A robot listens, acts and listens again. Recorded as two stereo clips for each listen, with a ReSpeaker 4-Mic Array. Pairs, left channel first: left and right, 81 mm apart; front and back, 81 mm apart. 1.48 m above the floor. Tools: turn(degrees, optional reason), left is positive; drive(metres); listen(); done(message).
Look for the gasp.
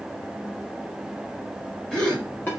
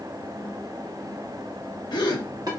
turn(degrees=10, reason="The gasp: 10° left.")
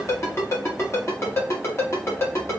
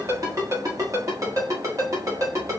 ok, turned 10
done("Facing where the gasp came from. I can't hear it now.")